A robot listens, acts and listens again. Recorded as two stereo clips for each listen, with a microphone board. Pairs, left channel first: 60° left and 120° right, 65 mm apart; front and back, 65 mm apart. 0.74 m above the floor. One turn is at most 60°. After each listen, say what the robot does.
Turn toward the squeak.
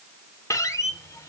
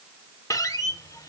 Turn 25° left.
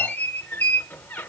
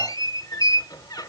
Facing the squeak.